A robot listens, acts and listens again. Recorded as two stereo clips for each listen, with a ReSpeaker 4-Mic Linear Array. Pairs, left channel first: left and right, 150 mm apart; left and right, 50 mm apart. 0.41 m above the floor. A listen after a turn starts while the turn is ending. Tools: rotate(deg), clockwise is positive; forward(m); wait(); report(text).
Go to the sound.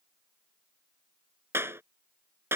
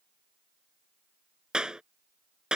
rotate(15)
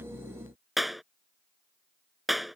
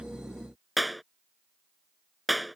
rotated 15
forward(1.0)
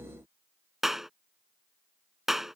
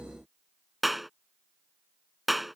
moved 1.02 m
forward(1.0)
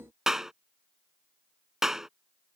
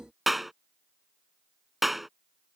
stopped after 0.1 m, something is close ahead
report("Something is in my way. I am facing the clap but have not reached it.")